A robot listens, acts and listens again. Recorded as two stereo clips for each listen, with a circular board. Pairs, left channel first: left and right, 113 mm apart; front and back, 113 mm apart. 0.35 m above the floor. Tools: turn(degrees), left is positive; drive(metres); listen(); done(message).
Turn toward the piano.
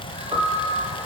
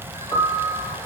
turn(degrees=-50)
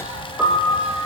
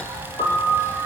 turn(degrees=-10)
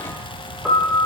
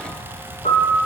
done("Found it: a piano, straight ahead, 2 to 4 m away.")